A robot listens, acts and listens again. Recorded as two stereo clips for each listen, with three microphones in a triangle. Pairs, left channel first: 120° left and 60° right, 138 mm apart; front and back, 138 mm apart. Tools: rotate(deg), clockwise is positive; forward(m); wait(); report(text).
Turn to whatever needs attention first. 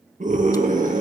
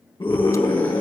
rotate(55)
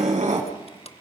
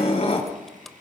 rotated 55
rotate(25)
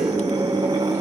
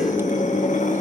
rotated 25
report("Found it: a scream, straight ahead, over 4 m away.")